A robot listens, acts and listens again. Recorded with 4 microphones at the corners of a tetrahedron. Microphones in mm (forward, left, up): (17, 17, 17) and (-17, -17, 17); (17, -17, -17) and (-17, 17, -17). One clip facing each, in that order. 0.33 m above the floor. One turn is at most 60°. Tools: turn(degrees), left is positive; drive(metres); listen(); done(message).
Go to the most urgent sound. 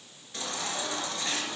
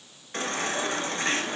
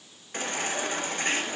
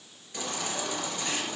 turn(degrees=-60)
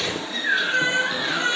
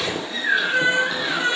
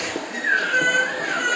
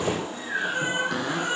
turn(degrees=-50)
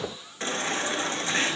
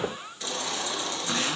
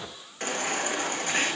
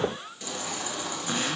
drive(metres=1.0)
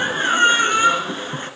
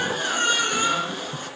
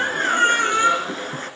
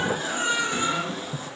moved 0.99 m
turn(degrees=-10)
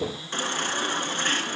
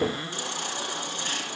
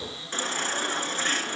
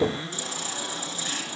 drive(metres=1.0)
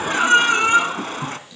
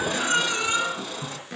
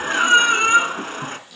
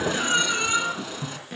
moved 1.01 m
drive(metres=1.0)
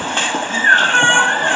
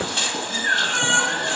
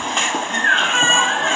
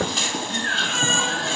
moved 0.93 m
drive(metres=1.0)
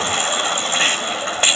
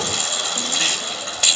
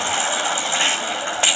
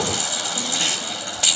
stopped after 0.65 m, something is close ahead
done("I am next to the baby crying.")